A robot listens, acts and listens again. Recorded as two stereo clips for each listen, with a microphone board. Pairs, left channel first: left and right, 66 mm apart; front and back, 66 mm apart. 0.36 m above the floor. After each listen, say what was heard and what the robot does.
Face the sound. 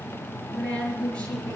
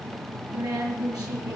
The woman speaking: 165° left. Turn 165° left.
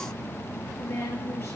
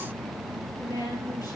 The woman speaking is now 30° left. Turn 30° left.
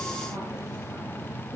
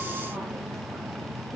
Keep listening.
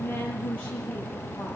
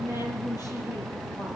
The woman speaking is now 20° left. Turn 20° left.
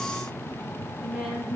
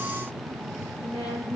Facing the woman speaking.